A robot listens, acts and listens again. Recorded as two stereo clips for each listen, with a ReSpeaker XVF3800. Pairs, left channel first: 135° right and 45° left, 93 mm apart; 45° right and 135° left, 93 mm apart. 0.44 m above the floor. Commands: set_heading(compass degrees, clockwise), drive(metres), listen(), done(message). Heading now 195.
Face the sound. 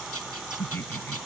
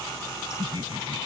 set_heading(35)
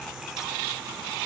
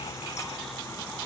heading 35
listen()
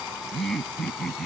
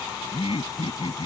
set_heading(85)
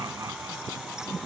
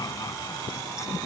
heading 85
done("Facing the laughter.")